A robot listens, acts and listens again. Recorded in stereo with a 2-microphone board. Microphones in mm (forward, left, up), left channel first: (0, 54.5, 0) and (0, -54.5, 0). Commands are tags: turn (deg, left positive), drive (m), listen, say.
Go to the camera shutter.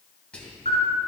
<turn deg="90"/>
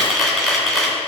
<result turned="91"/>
<drive m="1.0"/>
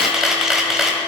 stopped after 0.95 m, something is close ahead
<say>I am next to the camera shutter.</say>